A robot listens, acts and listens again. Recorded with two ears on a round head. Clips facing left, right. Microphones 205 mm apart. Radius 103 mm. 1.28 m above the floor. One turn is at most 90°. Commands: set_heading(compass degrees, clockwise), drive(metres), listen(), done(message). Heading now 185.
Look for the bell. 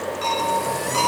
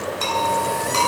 set_heading(245)
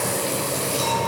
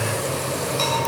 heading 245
listen()
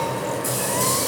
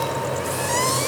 listen()
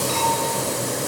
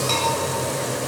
done("I heard a bell, but can't make it out now. It was about straight ahead or 60° right.")